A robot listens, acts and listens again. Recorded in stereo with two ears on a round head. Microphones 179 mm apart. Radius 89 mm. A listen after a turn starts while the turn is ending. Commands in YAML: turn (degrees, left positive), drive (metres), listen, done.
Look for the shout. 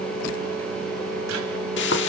listen: true
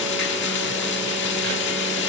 listen: true
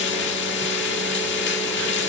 done: "I can't make out a shout, only frying."